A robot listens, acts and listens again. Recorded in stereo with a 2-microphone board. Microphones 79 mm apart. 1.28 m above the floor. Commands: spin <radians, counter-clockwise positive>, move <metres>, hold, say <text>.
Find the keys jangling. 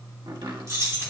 spin -0.61
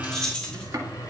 spin 0.17
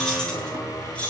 spin 0.26
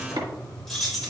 say Found it: keys jangling, straight ahead.